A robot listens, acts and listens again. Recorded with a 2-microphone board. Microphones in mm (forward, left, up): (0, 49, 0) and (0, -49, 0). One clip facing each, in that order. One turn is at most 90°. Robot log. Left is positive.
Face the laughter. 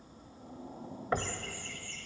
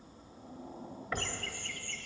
note: The laughter: about 75° right or 105° right.
cmd yaw -75
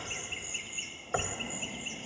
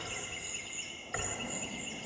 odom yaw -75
note: So it is at 10° right.
cmd yaw -10
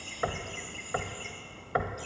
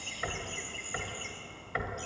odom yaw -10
end: Facing the laughter.